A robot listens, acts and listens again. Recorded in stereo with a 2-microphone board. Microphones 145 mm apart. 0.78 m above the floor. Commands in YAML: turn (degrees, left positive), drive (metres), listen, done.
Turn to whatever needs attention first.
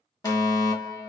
turn: 25
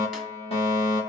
turn: 120
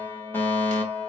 turn: 15
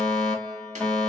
done: "Facing the fire alarm, 2 to 4 m away."